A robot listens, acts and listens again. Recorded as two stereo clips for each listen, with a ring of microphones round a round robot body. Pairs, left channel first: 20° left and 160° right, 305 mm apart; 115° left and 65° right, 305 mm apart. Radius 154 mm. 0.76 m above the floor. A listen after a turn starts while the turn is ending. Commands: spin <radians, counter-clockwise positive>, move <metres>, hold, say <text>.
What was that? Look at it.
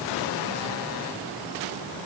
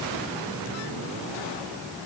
hold
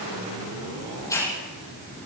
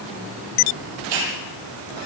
spin -1.05
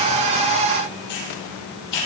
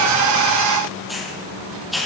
spin 0.35
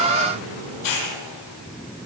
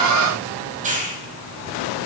say Facing the hiss.